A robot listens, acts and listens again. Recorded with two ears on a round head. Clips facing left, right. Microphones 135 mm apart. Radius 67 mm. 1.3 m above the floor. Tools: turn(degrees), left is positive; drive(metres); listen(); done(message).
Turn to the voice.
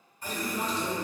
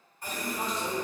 turn(degrees=30)
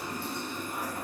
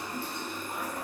turn(degrees=-30)
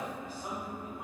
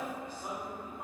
turn(degrees=10)
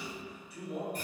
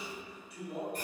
done("Found it: a man speaking, straight ahead, 1 to 2 m away.")